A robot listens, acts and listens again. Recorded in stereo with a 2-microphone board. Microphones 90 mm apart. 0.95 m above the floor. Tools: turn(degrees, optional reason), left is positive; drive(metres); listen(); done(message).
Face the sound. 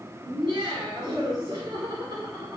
turn(degrees=-50, reason="The laughter: about 50° right or 130° right.")
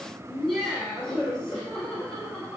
turn(degrees=15, reason="So it is at 15° left.")
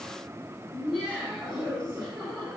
turn(degrees=10, reason="The laughter is now 10° left.")
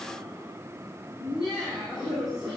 done("Found it: laughter, straight ahead.")